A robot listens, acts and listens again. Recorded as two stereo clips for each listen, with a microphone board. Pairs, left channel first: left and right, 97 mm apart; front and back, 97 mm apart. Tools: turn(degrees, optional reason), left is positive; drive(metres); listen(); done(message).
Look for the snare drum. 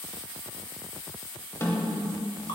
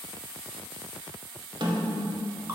turn(degrees=150, reason="The snare drum: 150° left.")
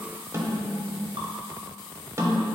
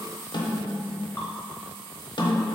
turn(degrees=-30, reason="The snare drum is now 30° right.")
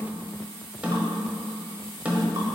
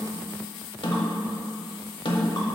turn(degrees=-15, reason="The snare drum is now 15° right.")
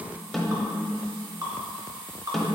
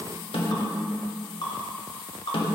done("Found it: a snare drum, straight ahead.")